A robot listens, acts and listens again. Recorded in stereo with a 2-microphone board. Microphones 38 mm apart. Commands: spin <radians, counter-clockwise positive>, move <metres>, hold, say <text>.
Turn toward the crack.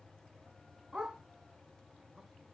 hold
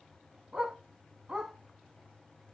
hold
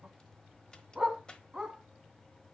spin 0.44
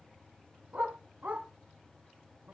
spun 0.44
hold
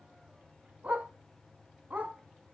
say I heard a crack, but can't make it out now. It was about straight ahead or 130° left.